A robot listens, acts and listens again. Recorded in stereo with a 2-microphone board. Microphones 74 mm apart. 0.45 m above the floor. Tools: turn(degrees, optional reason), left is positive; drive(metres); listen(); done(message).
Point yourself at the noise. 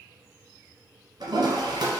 turn(degrees=-75, reason="The toilet flushing: about 75° right or 105° right.")
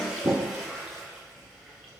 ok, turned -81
done("Facing the toilet flushing.")